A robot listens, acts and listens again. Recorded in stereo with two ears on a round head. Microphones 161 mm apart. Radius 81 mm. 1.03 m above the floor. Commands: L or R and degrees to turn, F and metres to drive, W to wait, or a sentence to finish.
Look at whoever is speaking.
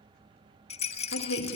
L90
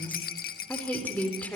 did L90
L10
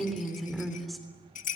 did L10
Facing the woman speaking, 2 to 4 m away.